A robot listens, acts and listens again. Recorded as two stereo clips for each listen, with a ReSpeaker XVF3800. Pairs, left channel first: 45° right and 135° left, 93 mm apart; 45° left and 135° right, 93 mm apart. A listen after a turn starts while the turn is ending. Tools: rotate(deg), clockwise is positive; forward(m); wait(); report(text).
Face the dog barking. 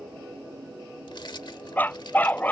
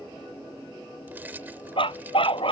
rotate(-30)
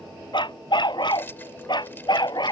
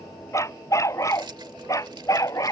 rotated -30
report("Found it: a dog barking, straight ahead.")